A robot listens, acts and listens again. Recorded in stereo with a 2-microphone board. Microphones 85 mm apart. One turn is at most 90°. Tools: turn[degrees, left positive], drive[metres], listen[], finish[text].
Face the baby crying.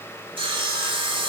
Action: listen[]
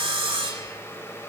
Action: listen[]
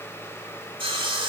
Action: finish[I can't make out a baby crying, only sawing.]